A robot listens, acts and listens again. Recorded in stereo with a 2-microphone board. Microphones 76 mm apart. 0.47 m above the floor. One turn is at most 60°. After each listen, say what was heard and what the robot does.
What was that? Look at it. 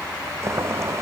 The boiling: about 40° right or 140° right. Turn 40° right.
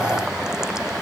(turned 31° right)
So it is at 10° right. Turn 10° right.
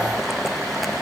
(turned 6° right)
Facing the boiling.